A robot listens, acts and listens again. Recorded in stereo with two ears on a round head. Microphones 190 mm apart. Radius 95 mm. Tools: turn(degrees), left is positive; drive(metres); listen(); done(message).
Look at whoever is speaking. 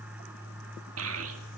listen()
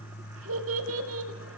turn(degrees=-70)
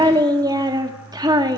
turn(degrees=-20)
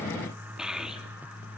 done("Facing the child speaking, 2 to 4 m away.")